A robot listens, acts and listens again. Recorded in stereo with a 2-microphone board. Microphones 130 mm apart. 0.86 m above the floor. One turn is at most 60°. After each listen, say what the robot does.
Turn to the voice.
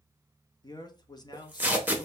Turn 30° left.
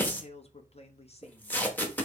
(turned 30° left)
Turn 60° left.
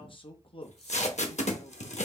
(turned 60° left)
Turn 50° left.
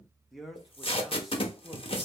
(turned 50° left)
Found it: a man speaking, straight ahead, under 1 m away.